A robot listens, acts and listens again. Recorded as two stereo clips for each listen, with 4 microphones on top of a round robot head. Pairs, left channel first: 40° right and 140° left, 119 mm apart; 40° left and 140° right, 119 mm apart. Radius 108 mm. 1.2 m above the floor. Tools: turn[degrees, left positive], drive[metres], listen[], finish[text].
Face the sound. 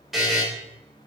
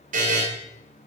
Thought: The buzzer: 130° right.
Action: turn[-130]
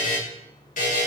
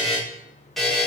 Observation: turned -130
Thought: The buzzer is now 50° right.
Action: turn[-50]
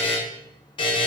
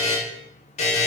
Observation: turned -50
Thought: The buzzer is now 10° left.
Action: turn[10]
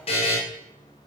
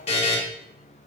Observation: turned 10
Action: finish[Facing the buzzer.]